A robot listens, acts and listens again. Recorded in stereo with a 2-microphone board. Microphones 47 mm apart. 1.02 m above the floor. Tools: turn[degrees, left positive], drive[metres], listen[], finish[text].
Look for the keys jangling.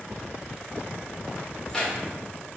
Thought: The keys jangling: about 20° left or 160° left.
Action: turn[20]
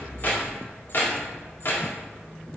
Thought: So it is at 130° left.
Action: turn[130]
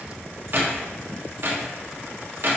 Thought: The keys jangling is now 50° right.
Action: turn[-50]
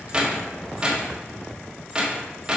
Thought: The keys jangling is now 20° right.
Action: turn[-20]
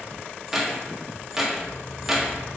Action: finish[Facing the keys jangling.]